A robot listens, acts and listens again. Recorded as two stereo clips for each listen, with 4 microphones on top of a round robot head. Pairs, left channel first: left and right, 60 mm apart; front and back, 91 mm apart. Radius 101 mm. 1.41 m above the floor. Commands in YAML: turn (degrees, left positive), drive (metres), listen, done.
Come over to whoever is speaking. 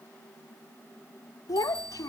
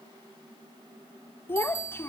turn: 65
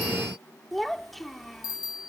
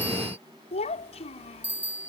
drive: 1.0
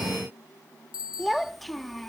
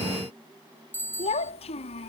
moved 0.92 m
drive: 1.0
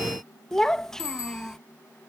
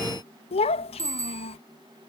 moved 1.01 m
turn: 10
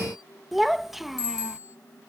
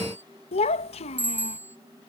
drive: 1.0
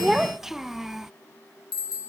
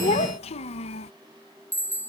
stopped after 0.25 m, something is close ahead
done: "I am next to the child speaking."